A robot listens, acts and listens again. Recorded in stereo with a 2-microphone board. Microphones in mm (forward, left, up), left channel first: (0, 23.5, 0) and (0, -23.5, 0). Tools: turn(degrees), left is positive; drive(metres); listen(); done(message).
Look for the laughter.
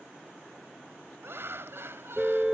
turn(degrees=-65)
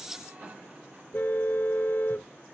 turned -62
listen()
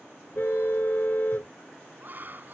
turn(degrees=-45)
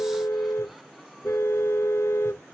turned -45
listen()
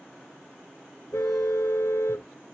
listen()
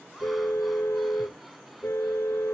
done("Facing where the laughter came from. I can't hear it now.")